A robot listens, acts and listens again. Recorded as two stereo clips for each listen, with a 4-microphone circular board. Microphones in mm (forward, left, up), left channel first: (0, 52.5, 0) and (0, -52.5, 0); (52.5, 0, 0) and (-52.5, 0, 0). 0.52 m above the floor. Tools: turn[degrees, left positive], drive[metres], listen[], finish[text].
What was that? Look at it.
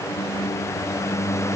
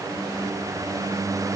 Action: listen[]
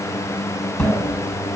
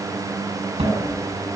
Thought: The cupboard door: 160° left.
Action: turn[160]
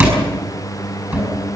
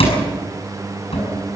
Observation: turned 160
Thought: The cupboard door is now 20° right.
Action: turn[-20]
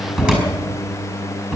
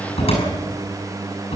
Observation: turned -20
Thought: The cupboard door is now 10° right.
Action: turn[-10]
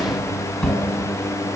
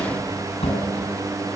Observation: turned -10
Action: finish[Facing the cupboard door.]